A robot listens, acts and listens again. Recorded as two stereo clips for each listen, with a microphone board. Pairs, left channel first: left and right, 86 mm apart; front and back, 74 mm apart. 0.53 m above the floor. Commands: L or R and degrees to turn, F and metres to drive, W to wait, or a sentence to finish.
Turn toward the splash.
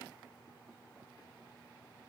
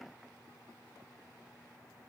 W
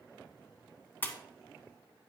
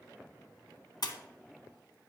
L20
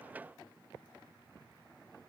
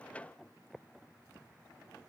Facing where the splash came from. I can't hear it now.